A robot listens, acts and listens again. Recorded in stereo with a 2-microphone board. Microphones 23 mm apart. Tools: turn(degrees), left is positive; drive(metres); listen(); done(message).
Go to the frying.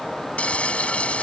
turn(degrees=70)
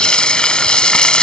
turn(degrees=40)
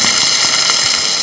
drive(metres=1.0)
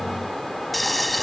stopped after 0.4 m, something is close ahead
done("Something is in my way. I am facing the frying but have not reached it.")